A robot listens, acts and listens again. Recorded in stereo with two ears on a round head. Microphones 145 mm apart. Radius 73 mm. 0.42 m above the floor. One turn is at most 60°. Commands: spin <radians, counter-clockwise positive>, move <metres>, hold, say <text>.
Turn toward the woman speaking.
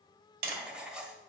hold
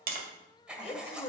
spin 0.61
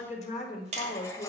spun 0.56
spin 0.70
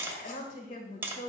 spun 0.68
spin 1.05
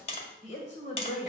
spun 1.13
spin 0.79
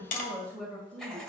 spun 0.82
say Found it: a woman speaking, straight ahead.